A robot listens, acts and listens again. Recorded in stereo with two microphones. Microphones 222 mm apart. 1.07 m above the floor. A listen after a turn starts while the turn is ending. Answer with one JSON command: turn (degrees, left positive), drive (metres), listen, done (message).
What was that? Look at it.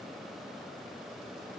{"listen": true}
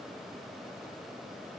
{"listen": true}
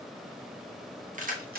{"turn": -45}
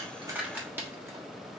{"turn": -10}
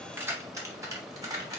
{"turn": -15}
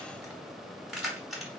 {"done": "Facing the keys jangling."}